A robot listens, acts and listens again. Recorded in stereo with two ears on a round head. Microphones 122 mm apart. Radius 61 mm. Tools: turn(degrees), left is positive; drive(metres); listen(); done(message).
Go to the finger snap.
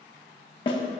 listen()
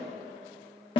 listen()
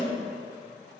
done("I can't make out a finger snap to turn to.")